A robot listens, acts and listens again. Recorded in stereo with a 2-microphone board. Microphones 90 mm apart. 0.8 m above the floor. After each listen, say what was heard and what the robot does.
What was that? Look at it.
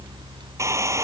The hair dryer: about 35° right or 145° right. Turn 35° right.
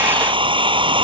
So it is at 110° right. Turn 110° right.
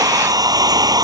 The hair dryer is now 45° right. Turn 45° right.
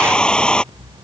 The hair dryer is now 10° left. Turn 10° left.
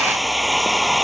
Found it: a hair dryer, straight ahead.